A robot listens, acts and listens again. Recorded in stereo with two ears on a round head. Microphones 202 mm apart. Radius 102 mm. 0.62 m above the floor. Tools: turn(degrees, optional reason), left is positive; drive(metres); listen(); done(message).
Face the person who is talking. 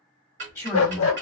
turn(degrees=30)
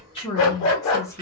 turn(degrees=30)
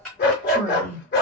turn(degrees=30)
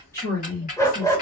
turn(degrees=30)
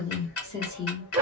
turn(degrees=20, reason="The woman speaking: about 20° left or 160° left.")
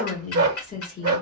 turn(degrees=145, reason="So it is at 145° left.")
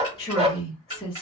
turn(degrees=15, reason="The woman speaking is now 15° left.")
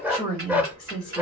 done("Found it: a woman speaking, straight ahead.")